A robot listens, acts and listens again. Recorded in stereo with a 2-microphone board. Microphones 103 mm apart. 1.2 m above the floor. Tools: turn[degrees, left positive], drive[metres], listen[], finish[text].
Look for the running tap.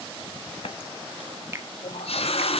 Thought: The running tap: about 70° left or 110° left.
Action: turn[70]
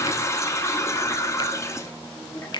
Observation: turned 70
Thought: So it is at 30° left.
Action: turn[30]
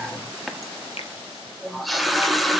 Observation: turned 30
Action: finish[Found it: a running tap, straight ahead.]